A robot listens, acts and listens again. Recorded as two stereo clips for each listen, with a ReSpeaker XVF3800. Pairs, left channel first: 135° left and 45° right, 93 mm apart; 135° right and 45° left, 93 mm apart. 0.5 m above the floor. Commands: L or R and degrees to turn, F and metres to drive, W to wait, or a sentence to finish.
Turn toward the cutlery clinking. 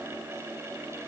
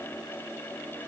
W
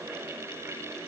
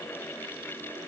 W
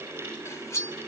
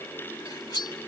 R170
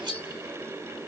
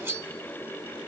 R15
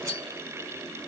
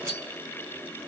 Found it: cutlery clinking, straight ahead.